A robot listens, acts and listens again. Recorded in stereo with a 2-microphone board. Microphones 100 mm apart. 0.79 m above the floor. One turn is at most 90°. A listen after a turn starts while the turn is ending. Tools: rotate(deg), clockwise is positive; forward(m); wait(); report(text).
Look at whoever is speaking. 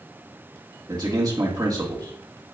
rotate(40)
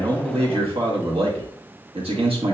rotate(90)
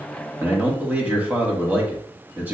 rotate(20)
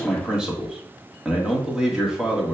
rotate(10)
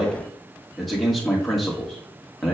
report("Found it: a man speaking, straight ahead.")